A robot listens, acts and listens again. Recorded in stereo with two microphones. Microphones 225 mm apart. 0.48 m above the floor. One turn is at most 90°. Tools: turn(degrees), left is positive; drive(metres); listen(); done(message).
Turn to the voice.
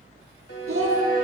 turn(degrees=-75)
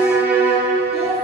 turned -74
listen()
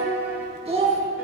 turn(degrees=-30)
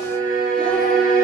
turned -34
listen()
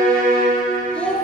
done("Facing the child speaking, 2 to 4 m away.")